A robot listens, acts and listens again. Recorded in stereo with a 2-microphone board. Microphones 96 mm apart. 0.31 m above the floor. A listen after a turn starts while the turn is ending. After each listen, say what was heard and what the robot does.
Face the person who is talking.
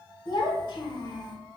The child speaking: about 55° left or 125° left. Turn 55° left.
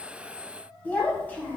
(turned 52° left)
So it is at 20° left. Turn 20° left.
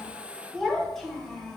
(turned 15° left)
Facing the child speaking.